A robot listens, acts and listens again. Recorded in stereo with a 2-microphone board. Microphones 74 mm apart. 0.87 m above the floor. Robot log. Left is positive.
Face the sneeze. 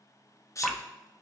note: The sneeze: about 45° left or 135° left.
cmd yaw +45
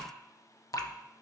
cmd idle
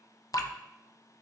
end: I heard a sneeze, but can't make it out now. It was about straight ahead or 90° left.